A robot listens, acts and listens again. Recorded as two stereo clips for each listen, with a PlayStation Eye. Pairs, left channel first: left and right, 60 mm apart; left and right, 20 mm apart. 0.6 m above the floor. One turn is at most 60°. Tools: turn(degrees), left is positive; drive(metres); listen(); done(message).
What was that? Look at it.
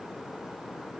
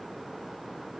listen()
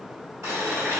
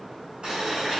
turn(degrees=-60)
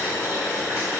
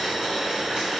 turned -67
turn(degrees=-50)
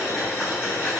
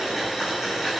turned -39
turn(degrees=-10)
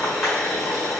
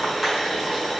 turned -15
done("Facing the boiling, 1 to 2 m away.")